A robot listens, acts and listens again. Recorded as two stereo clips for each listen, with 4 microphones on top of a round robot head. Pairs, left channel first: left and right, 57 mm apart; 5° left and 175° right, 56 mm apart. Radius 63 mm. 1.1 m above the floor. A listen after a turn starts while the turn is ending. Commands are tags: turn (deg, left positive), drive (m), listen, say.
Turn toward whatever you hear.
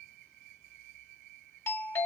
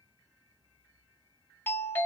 <turn deg="50"/>
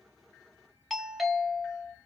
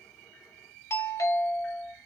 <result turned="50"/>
<say>Found it: a doorbell, straight ahead, 1 to 2 m away.</say>